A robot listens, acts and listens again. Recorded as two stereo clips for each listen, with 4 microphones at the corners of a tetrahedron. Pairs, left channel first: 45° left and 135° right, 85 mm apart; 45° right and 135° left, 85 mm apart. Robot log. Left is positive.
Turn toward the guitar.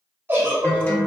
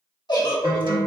note: The guitar: 115° left.
cmd yaw +115
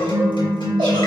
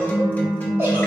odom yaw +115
note: The guitar is now 30° left.
cmd yaw +30
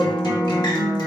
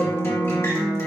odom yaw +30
note: The guitar is now 15° left.
cmd yaw +15
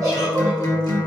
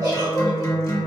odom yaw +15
end: Facing the guitar.